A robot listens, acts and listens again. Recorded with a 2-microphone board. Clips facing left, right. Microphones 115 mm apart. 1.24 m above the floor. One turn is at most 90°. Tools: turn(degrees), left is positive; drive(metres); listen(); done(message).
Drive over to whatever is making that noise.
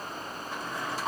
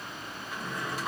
turn(degrees=30)
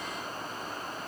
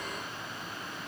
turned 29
listen()
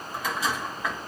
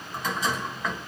drive(metres=1.0)
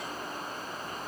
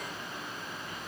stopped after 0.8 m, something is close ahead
listen()
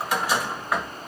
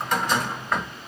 turn(degrees=10)
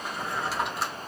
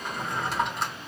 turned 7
done("Arrived at the drawer, straight ahead.")